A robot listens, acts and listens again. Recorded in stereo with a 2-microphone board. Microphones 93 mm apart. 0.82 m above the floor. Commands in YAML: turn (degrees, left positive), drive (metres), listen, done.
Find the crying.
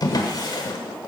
listen: true
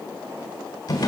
listen: true
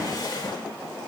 done: "I can't make out crying to turn to."